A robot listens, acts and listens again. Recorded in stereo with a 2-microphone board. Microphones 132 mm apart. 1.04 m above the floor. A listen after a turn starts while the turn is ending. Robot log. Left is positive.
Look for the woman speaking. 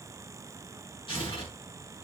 cmd idle
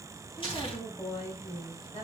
note: The woman speaking: about 50° left or 130° left.
cmd yaw +50
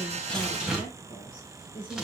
note: So it is at 70° left.
cmd yaw +70
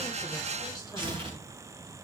cmd idle
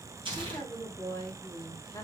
note: The woman speaking is now 25° left.
cmd yaw +25
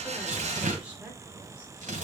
cmd idle
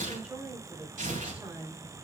note: The woman speaking is now 10° right.
cmd yaw -10
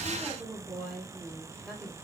end: Found it: a woman speaking, straight ahead.